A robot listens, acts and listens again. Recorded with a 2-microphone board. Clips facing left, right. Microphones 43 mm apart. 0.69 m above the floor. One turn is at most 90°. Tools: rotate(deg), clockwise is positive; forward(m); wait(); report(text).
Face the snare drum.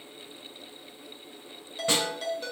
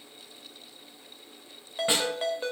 rotate(15)
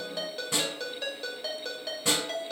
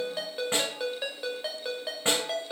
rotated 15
rotate(90)
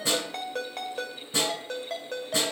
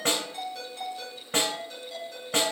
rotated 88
rotate(60)
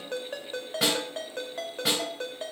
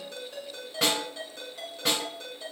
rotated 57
report("Facing the snare drum.")